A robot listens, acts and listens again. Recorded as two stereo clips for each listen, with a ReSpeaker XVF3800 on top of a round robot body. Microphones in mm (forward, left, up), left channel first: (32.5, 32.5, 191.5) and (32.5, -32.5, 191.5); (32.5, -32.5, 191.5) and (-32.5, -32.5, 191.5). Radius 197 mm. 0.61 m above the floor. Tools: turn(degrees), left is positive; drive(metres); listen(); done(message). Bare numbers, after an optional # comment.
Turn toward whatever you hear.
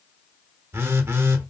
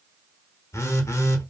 # The phone buzzing: 40° right.
turn(-40)
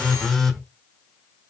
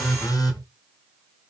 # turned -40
done("Facing the phone buzzing, under 1 m away.")